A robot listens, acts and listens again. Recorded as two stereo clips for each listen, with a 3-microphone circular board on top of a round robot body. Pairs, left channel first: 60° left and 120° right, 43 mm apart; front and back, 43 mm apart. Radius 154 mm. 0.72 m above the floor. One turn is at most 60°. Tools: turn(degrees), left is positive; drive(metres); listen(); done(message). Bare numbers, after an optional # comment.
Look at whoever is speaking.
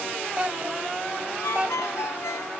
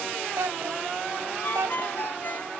# The child speaking: 175° left.
turn(60)
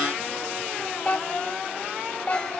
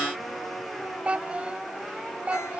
# The child speaking is now 115° left.
turn(60)
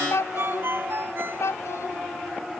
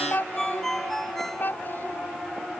# The child speaking is now 45° left.
turn(45)
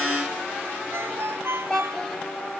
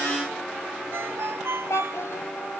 # The child speaking is now 20° right.
turn(-20)
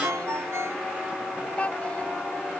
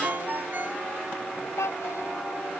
done("Facing the child speaking.")